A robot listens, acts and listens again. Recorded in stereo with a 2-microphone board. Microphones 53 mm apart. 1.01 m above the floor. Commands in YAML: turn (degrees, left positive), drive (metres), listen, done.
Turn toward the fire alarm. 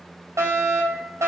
turn: -75
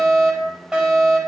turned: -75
turn: -15
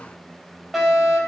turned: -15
done: "Found it: a fire alarm, straight ahead."